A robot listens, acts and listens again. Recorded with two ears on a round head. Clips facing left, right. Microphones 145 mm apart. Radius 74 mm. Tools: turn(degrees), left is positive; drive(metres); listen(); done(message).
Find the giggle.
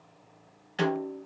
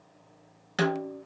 listen()
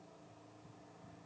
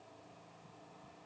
listen()
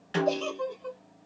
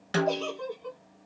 turn(degrees=40)
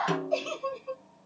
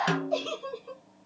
done("Found it: a giggle, straight ahead, 1 to 2 m away.")